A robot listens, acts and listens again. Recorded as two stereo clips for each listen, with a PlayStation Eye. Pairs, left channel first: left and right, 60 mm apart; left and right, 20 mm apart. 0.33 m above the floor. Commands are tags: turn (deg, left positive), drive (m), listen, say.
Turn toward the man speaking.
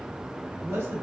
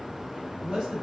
<turn deg="-40"/>
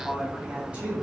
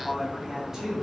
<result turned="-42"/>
<turn deg="-20"/>
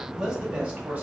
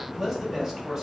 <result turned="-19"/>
<turn deg="-20"/>
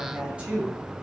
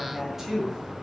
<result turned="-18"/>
<turn deg="-20"/>
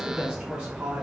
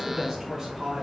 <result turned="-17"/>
<turn deg="-25"/>
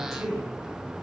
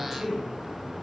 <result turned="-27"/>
<turn deg="-10"/>
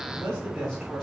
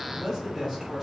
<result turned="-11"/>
<say>Found it: a man speaking, straight ahead.</say>